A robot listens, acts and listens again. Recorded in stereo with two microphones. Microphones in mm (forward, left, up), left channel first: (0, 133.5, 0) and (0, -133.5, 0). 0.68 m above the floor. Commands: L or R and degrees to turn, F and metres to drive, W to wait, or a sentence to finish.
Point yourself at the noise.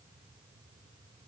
W
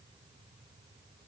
W
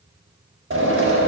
R50
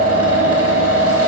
R75
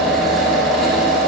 Found it: a drill, straight ahead.